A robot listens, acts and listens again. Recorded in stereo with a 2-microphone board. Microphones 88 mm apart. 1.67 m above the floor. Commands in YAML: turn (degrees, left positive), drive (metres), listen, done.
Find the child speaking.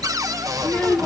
turn: 15
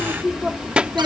turn: -20
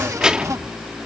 turn: -10
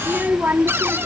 turn: -25
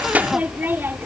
turn: -25
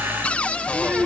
turn: -20
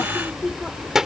done: "Facing the child speaking."